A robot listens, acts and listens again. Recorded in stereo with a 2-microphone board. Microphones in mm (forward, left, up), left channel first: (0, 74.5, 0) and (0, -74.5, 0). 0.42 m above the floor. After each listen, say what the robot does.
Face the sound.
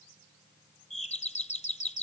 Turn 50° left.
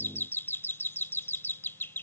Turn 20° left.
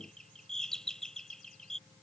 Found it: a doorbell, straight ahead.